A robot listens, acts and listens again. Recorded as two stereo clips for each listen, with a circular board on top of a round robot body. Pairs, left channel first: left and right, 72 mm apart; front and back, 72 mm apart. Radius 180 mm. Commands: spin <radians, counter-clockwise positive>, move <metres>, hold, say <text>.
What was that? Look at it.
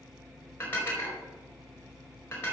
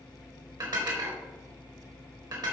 spin 2.53
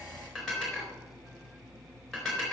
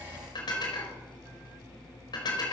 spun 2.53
say Found it: dishes clattering, straight ahead, over 4 m away.